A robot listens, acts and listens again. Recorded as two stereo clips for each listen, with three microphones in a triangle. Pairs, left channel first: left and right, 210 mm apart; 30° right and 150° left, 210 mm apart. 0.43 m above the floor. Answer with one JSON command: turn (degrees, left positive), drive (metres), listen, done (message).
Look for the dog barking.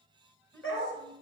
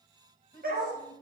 {"turn": 105}
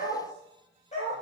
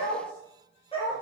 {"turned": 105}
{"turn": 35}
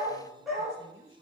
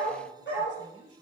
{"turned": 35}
{"done": "Found it: a dog barking, straight ahead, over 4 m away."}